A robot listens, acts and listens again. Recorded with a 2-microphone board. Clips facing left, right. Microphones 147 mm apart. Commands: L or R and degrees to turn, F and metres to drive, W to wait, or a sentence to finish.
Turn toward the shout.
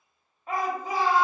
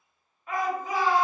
L35
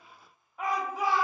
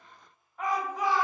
L10
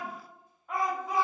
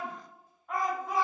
Facing the shout, 1 to 2 m away.